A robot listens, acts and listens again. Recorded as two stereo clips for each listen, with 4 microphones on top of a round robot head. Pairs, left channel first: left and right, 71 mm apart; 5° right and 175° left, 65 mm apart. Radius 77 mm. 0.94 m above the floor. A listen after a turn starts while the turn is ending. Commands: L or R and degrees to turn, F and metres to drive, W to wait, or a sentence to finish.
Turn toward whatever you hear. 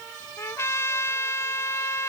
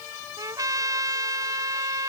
L145
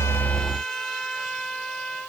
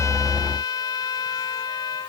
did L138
Facing the trumpet.